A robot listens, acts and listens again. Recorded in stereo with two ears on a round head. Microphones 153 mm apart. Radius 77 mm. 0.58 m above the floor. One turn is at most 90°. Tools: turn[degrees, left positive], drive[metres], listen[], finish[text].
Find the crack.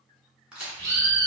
Action: turn[-30]
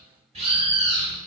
Action: listen[]
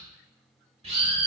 Action: finish[I heard a crack, but can't make it out now. It was about 25° left or 145° right.]